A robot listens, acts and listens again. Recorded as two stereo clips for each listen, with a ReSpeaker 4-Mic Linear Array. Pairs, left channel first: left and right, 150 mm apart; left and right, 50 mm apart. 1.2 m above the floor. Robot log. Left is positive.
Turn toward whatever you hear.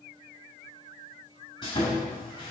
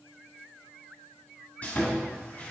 note: The sawing: about 35° left or 145° left.
cmd yaw +35
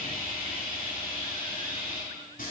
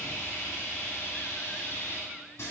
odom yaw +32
note: So it is at 115° left.
cmd yaw +115
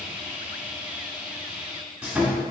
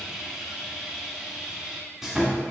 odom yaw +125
note: The sawing is now 10° right.
cmd yaw -10
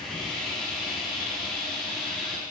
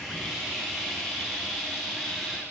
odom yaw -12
end: Facing the sawing, 1 to 2 m away.